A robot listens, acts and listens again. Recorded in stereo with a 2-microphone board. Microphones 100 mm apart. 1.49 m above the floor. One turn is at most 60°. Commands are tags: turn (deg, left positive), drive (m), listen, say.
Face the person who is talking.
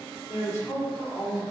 <turn deg="35"/>
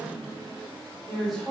<say>Found it: a woman speaking, straight ahead, over 4 m away.</say>